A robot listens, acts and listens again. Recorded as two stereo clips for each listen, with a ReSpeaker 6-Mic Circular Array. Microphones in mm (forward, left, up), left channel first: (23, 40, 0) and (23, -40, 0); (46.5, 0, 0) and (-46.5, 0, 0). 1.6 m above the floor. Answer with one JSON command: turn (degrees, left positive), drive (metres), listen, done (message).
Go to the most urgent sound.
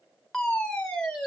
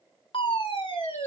{"turn": 15}
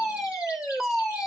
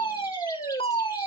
{"drive": 1.0}
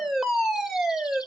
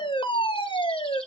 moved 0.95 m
{"drive": 1.0}
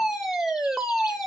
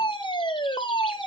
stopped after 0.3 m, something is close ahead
{"done": "I am next to the fire alarm."}